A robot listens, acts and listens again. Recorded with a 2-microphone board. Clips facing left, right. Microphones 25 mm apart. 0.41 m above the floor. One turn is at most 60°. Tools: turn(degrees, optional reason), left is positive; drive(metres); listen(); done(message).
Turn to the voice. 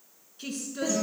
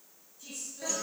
turn(degrees=60, reason="The woman speaking: about 65° left or 115° left.")
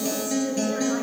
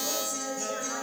listen()
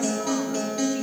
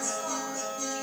listen()
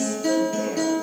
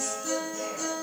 done("I heard a woman speaking, but can't make it out now. It was about 5° left or 55° left.")